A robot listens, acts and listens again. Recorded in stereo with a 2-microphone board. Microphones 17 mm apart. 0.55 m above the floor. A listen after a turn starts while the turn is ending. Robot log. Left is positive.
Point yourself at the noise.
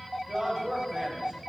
note: The man speaking: about 60° right or 120° right.
cmd yaw -60
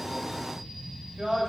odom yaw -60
note: So it is at 55° right.
cmd yaw -55
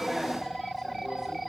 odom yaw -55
cmd idle
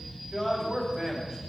note: The man speaking is now 20° right.
cmd yaw -20
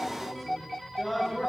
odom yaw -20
note: The man speaking is now 10° right.
cmd yaw -10
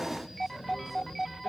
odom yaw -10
cmd idle
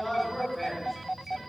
end: Found it: a man speaking, straight ahead.